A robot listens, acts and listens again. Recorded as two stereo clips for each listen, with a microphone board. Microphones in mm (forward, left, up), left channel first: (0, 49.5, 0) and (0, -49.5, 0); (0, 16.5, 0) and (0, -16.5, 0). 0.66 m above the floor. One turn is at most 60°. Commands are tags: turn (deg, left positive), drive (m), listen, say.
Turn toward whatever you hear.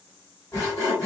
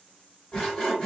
<turn deg="30"/>
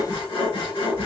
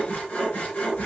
<turn deg="60"/>
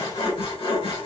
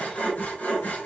<turn deg="60"/>
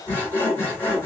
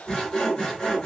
<turn deg="20"/>
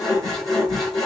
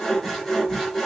<say>Found it: sawing, straight ahead, 2 to 4 m away.</say>